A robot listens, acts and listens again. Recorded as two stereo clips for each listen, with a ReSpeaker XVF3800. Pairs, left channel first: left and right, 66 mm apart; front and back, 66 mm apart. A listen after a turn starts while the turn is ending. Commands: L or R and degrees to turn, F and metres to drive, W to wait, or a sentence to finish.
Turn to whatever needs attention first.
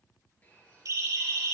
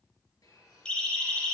R70
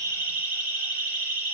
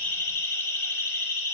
R35
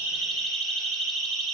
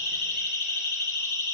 Facing the siren.